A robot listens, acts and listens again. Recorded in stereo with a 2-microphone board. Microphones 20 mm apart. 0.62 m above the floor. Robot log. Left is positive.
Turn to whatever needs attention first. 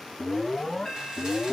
cmd yaw +30
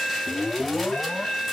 note: So it is at 145° left.
cmd yaw +145
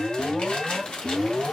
note: The alarm is now 25° left.
cmd yaw +25
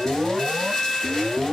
note: The alarm is now 10° right.
cmd yaw -10
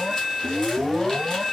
end: Facing the alarm, 2 to 4 m away.